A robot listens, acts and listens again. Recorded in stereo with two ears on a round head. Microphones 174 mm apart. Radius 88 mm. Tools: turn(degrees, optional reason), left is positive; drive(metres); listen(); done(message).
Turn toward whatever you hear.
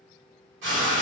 turn(degrees=-70, reason="The frying: about 70° right or 110° right.")
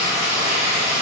turn(degrees=-10, reason="So it is at 10° right.")
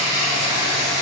done("Facing the frying, 1 to 2 m away.")